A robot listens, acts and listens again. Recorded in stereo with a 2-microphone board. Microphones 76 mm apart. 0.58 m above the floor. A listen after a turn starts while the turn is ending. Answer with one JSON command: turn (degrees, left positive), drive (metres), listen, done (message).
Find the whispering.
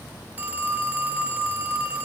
{"listen": true}
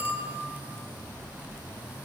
{"listen": true}
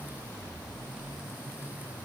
{"done": "I can't make out whispering, only a phone ringing."}